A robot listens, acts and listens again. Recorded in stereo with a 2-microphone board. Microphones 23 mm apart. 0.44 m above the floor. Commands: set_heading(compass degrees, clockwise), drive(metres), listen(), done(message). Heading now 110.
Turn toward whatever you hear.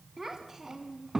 set_heading(135)
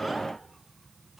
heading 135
listen()
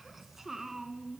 set_heading(150)
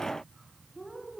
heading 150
set_heading(180)
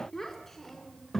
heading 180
set_heading(165)
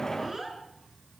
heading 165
done("Found it: a child speaking, straight ahead.")